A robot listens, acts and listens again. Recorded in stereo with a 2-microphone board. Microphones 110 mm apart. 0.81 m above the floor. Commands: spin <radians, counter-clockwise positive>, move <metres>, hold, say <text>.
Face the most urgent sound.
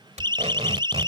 spin -0.70
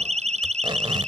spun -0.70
spin -1.66
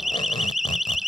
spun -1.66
say Facing the siren.